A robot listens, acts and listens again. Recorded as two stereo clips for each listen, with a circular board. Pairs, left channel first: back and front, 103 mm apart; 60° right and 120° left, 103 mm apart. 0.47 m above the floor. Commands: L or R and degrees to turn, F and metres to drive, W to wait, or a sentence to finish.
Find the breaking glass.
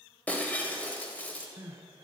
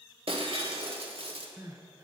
L105
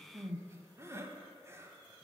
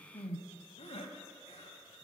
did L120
R15
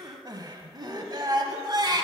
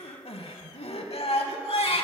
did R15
I heard breaking glass from this way, but can't make it out now.